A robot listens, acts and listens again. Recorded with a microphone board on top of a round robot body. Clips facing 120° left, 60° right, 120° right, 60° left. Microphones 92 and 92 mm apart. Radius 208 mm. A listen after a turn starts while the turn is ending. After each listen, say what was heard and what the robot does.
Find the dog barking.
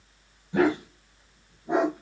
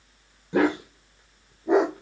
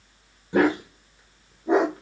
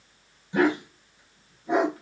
The dog barking: 60° right. Turn 60° right.
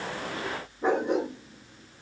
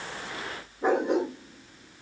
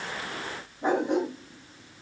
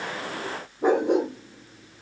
The dog barking is now 30° left. Turn 30° left.
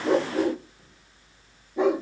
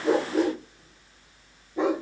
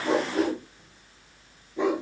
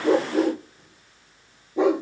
The dog barking is now 35° left. Turn 35° left.
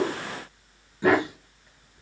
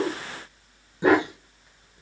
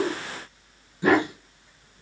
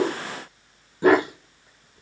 The dog barking is now 10° left. Turn 10° left.
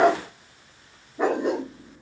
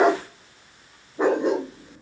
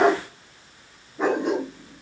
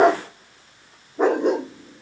Found it: a dog barking, straight ahead.